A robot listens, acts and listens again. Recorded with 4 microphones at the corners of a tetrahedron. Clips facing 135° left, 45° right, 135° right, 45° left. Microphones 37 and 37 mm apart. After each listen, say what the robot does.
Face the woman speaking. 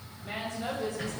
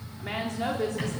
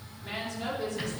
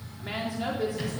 Turn 30° right.
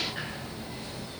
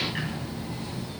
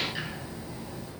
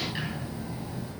Keep listening.
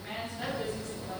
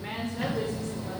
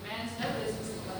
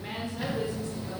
Turn 25° right.
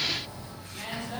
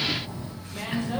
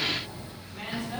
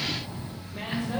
Found it: a woman speaking, straight ahead, 2 to 4 m away.